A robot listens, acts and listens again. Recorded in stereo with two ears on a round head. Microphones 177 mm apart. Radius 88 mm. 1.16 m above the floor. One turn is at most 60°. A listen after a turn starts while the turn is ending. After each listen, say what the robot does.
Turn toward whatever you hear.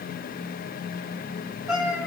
Turn 30° right.
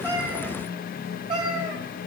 Turn 60° right.
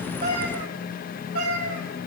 Turn 60° right.
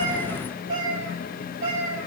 Turn 45° right.
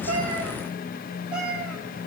Found it: a cat meowing, straight ahead, over 4 m away.